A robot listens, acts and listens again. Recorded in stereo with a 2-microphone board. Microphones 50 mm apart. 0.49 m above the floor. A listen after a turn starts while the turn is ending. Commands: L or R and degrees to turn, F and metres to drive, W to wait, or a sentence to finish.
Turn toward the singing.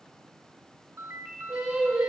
R20
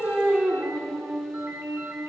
R30
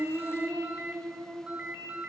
L20
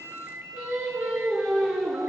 Found it: singing, straight ahead.